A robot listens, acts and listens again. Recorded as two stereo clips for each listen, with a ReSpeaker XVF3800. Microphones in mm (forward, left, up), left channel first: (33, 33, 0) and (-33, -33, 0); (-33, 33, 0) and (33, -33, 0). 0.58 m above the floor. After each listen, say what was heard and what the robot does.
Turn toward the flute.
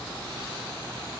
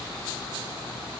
Keep listening.
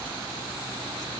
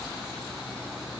Keep listening.
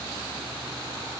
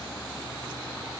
I can't make out a flute.